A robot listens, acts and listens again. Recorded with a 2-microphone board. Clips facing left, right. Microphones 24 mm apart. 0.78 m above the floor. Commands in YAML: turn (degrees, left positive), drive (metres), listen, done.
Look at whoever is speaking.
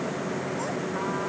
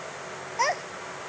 turn: -60
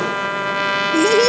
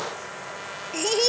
done: "Facing the child speaking."